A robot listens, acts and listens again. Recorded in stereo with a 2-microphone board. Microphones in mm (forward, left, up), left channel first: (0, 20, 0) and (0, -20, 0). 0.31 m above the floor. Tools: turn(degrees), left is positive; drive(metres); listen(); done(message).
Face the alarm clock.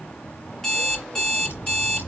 turn(degrees=30)
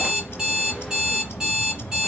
turn(degrees=-20)
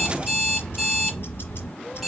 done("Found it: an alarm clock, straight ahead.")